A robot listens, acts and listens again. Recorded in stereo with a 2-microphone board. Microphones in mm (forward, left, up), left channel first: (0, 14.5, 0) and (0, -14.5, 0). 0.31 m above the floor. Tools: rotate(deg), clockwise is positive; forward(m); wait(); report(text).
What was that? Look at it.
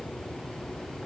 wait()
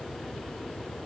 wait()
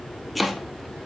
rotate(-30)
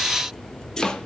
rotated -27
rotate(-155)
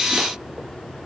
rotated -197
rotate(45)
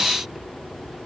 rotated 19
rotate(25)
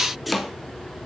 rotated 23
report("Facing the chopping.")